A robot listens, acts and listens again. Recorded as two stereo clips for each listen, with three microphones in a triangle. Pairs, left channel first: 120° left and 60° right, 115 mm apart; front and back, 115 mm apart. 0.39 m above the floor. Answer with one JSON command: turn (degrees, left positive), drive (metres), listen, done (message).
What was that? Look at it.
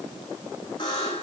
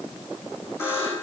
{"turn": 70}
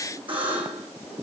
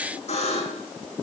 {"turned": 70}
{"turn": -20}
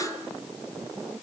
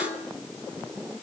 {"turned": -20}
{"turn": -10}
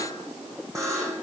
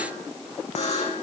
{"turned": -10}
{"done": "Facing the buzzer, over 4 m away."}